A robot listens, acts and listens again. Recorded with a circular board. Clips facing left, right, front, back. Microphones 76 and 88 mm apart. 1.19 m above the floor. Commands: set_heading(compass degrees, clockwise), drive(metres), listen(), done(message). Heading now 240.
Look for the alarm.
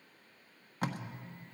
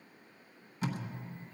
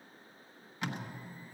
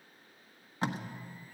listen()
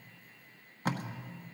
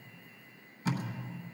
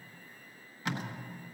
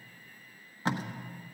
listen()
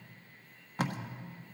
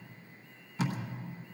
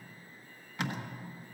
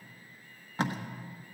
done("I can't make out an alarm, only tape being pulled.")